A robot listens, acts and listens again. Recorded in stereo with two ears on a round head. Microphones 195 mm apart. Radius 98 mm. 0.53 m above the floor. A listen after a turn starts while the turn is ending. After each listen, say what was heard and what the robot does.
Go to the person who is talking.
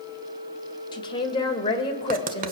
The woman speaking: about 20° left or 160° left. Turn 20° left.
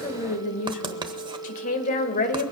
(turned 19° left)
So it is at 140° left. Turn 140° left.
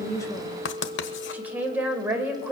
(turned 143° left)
The woman speaking is now 10° right. Turn 10° right.
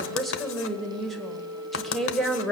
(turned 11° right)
Drive 1.0 m forward.
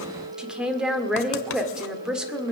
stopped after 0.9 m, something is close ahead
Arrived at the woman speaking, straight ahead.